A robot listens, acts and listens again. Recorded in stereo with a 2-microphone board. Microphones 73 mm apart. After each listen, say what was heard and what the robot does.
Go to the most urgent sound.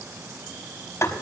Keep listening.
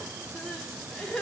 Turn 30° left.
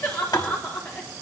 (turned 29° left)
So it is at 145° left. Turn 145° left.
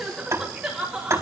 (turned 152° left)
Drive 1.0 m forward.
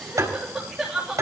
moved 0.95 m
Drive 1.0 m forward.
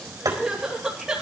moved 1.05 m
The crying is now 10° right. Turn 10° right.
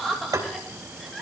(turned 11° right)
Drive 1.0 m forward.
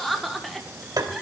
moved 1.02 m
Drive 1.0 m forward.
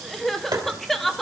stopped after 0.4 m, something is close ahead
Arrived at the crying, straight ahead.